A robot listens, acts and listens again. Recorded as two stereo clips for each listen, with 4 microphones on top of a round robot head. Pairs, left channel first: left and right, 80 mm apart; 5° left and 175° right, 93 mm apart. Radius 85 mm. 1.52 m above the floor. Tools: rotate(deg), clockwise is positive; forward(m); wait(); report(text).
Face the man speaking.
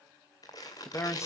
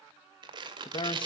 rotate(-35)
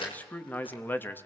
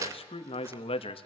rotate(-25)
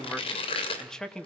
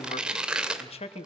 rotate(-10)
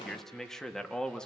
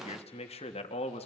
rotate(-10)
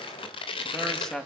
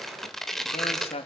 report("Found it: a man speaking, straight ahead, 2 to 4 m away.")